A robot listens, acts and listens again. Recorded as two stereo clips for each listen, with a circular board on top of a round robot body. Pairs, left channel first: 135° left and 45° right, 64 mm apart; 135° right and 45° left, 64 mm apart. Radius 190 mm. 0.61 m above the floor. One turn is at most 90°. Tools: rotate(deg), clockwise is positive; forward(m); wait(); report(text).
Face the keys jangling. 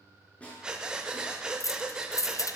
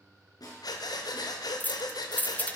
rotate(-90)
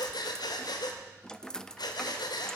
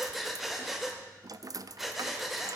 rotate(-60)
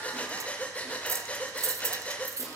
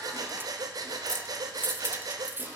rotate(10)
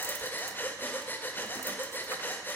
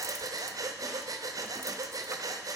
wait()
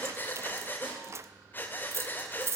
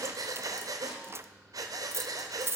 report("Found it: keys jangling, straight ahead, under 1 m away.")